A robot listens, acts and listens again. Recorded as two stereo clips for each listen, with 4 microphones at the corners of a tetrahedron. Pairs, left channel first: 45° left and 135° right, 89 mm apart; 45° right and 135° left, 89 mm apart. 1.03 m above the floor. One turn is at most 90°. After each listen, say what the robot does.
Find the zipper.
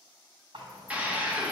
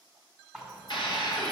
Turn 90° right.
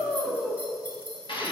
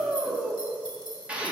Turn 15° right.
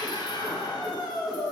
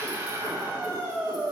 Keep listening.
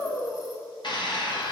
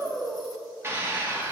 Keep listening.
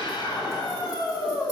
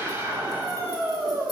I heard a zipper from this way, but can't make it out now.